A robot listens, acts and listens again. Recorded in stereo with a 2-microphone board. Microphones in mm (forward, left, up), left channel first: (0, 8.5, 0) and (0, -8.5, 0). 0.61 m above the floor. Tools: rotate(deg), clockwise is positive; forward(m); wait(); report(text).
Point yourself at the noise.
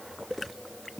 wait()
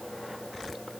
wait()
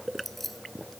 rotate(-15)
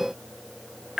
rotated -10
wait()
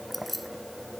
report("Found it: keys jangling, straight ahead.")